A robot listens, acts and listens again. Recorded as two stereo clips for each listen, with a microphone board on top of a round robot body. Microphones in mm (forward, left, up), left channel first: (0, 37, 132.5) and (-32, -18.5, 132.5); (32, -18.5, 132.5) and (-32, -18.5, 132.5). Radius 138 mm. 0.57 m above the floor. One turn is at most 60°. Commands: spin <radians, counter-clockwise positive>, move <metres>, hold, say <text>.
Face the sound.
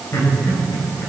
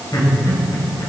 say Found it: laughter, straight ahead, 2 to 4 m away.